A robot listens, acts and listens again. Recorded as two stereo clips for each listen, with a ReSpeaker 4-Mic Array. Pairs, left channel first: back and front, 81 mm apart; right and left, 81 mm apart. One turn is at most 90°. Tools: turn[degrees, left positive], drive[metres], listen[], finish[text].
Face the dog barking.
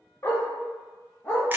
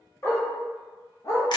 Thought: The dog barking: 120° right.
Action: turn[-90]
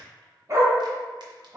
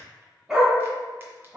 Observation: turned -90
Thought: The dog barking is now 35° left.
Action: turn[35]
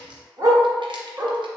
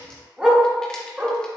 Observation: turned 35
Thought: The dog barking is now 30° left.
Action: turn[30]
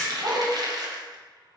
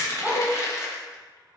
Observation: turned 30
Thought: The dog barking is now 15° left.
Action: turn[15]
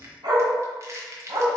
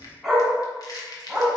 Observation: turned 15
Action: finish[Facing the dog barking.]